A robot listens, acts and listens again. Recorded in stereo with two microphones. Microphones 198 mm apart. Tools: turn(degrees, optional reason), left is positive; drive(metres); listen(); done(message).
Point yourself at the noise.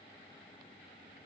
listen()
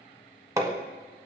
turn(degrees=-15, reason="The hammering: about 15° right or 165° right.")
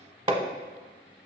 turn(degrees=-155, reason="So it is at 155° right.")
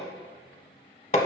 turn(degrees=40, reason="The hammering is now 40° left.")
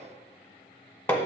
turn(degrees=10, reason="The hammering is now 10° left.")
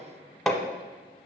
done("Facing the hammering, under 1 m away.")